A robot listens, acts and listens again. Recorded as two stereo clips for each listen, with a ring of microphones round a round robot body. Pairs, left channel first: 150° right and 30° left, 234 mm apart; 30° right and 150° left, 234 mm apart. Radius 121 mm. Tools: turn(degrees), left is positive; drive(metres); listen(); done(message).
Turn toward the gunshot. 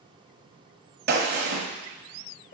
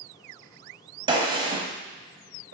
turn(degrees=80)
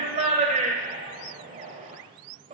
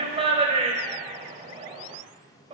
done("I heard a gunshot from this way, but can't make it out now.")